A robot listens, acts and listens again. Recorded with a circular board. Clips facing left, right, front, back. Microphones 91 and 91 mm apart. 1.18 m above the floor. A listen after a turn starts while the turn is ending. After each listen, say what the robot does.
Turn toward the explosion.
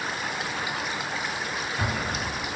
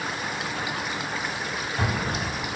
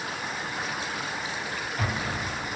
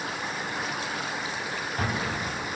Turn 135° right.
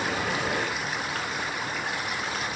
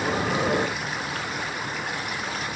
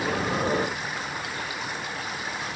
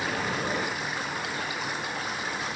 Facing where the explosion came from. I can't hear it now.